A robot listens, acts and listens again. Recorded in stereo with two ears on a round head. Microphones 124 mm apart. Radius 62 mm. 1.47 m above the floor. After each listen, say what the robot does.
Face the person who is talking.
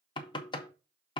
Keep listening.
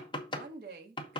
Turn 70° right.
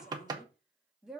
Facing the woman speaking, 1 to 2 m away.